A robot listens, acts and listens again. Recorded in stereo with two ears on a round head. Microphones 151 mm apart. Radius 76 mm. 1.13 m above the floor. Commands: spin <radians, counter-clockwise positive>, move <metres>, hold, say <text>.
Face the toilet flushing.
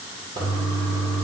spin -0.52
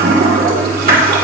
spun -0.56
spin -2.09
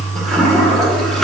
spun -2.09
say Found it: a toilet flushing, straight ahead.